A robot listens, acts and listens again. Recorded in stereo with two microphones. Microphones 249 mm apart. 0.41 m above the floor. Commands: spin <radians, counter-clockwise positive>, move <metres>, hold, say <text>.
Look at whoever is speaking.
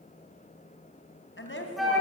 spin 0.87
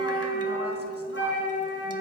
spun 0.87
hold
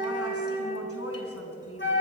spin 1.22
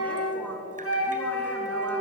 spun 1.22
hold
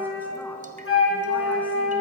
hold
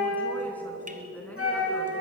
say Facing the woman speaking.